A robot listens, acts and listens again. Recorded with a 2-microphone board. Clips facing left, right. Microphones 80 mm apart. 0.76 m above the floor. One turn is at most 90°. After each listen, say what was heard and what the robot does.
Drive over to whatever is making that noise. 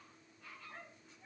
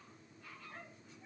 Keep listening.
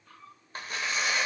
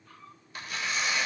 The tearing paper: about 40° left or 140° left. Turn 40° left.
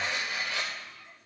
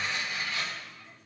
So it is at 100° left. Turn 90° left.
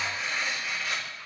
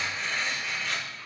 Drive 1.0 m forward.
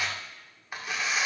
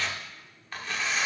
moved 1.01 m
The tearing paper is now 15° left. Turn 15° left.
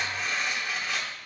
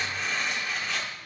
Drive 1.0 m forward.
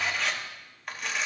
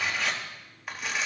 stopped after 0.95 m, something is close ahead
Arrived at the tearing paper, straight ahead.